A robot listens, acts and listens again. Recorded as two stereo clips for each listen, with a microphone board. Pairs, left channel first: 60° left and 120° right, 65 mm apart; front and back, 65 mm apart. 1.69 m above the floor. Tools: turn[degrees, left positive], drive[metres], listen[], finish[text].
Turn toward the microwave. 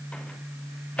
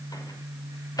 Thought: The microwave: 10° right.
Action: turn[-10]
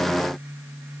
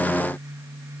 Action: listen[]
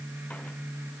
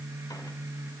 Action: listen[]
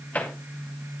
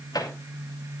Action: finish[Found it: a microwave, straight ahead.]